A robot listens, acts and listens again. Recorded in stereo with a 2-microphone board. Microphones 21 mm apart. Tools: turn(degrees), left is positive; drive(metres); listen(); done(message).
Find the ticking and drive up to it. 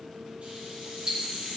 turn(degrees=-40)
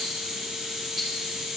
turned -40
listen()
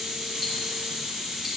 listen()
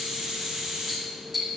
drive(metres=1.0)
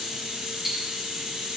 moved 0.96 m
drive(metres=1.0)
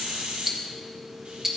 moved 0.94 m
turn(degrees=-15)
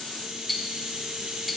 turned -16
drive(metres=1.0)
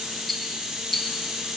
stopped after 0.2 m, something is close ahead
done("Arrived at the ticking, straight ahead.")